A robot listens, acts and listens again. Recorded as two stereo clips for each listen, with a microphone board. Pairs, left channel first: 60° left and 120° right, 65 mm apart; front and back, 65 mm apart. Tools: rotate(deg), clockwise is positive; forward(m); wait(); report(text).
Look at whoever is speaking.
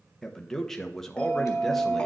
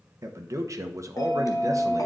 rotate(-145)
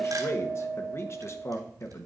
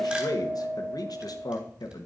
rotate(-15)
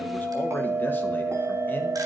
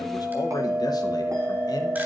wait()
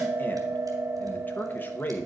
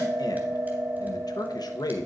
report("Found it: a man speaking, straight ahead, under 1 m away.")